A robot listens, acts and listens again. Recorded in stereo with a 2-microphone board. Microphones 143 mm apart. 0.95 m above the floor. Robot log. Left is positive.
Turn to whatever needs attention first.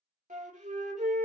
cmd idle
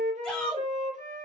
cmd yaw +30
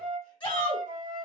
note: So it is at 140° left.
cmd yaw +140
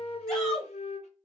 end: Found it: a shout, straight ahead.